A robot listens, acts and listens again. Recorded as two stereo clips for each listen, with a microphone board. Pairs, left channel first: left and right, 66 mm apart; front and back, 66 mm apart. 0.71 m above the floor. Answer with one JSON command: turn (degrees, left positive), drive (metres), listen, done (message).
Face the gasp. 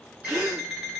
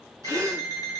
{"turn": -150}
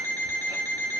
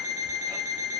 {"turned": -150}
{"done": "Facing where the gasp came from. I can't hear it now."}